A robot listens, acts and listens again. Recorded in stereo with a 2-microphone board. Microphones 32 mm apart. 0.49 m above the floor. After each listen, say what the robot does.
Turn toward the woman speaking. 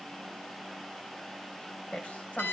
Turn 45° left.
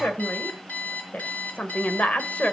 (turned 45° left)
Turn 45° left.
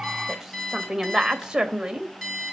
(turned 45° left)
Turn 20° right.
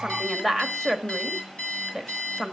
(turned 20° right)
Found it: a woman speaking, straight ahead.